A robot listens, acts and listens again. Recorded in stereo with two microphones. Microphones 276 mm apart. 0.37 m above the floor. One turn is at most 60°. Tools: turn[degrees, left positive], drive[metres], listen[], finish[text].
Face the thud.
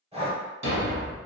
Thought: The thud: about 75° right or 105° right.
Action: turn[-60]
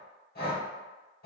Action: listen[]
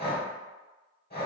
Action: finish[I heard a thud, but can't make it out now. It was about 15° right or 45° right.]